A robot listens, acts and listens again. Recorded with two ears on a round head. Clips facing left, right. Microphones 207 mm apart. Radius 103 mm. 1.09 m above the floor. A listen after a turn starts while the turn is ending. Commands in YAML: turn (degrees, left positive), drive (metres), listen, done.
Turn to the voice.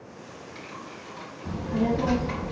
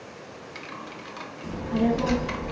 turn: -40
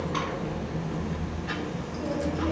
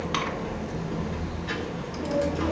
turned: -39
done: "Found it: a child speaking, straight ahead."